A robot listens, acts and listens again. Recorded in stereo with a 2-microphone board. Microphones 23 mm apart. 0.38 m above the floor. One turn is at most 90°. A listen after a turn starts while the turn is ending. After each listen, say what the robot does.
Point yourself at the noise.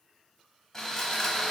Turn 20° left.
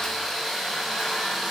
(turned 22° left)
Found it: sawing, straight ahead.